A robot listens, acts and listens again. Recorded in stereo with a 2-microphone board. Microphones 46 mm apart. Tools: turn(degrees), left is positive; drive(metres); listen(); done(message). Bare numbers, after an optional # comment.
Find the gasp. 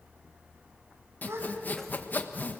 # The gasp: about 65° right or 115° right.
turn(-65)
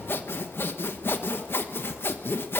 listen()
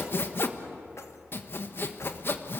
done("I heard a gasp, but can't make it out now. It was about straight ahead or 50° right.")